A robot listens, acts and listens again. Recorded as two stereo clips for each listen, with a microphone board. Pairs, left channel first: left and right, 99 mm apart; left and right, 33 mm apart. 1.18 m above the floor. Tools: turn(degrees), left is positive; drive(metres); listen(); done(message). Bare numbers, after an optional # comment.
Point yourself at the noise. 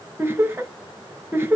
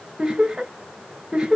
# The laughter: about 25° right or 155° right.
turn(-25)
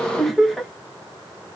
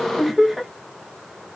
done("Found it: laughter, straight ahead.")